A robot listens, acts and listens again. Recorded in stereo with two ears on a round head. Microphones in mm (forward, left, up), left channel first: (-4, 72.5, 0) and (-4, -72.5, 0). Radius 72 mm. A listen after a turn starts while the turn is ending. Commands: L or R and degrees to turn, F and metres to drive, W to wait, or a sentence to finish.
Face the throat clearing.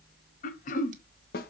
L50
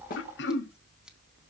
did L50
L80
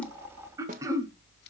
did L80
R20
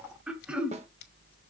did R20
Found it: throat clearing, straight ahead, 1 to 2 m away.